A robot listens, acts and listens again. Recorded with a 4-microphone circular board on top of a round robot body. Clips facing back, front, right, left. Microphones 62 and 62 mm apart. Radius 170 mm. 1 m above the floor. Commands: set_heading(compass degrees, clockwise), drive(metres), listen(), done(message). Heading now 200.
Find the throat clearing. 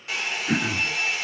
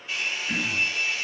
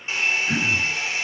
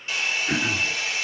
set_heading(35)
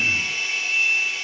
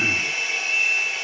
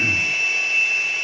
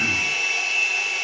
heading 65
set_heading(35)
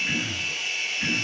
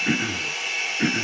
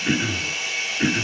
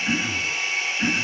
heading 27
set_heading(37)
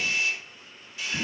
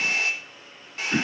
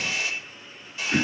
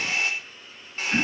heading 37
done("Facing the throat clearing, 1 to 2 m away.")